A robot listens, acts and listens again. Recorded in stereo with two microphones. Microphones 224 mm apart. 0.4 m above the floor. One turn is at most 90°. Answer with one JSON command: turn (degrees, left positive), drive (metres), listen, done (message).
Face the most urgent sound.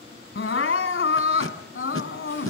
{"turn": 60}
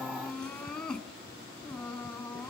{"done": "Facing the crying, 1 to 2 m away."}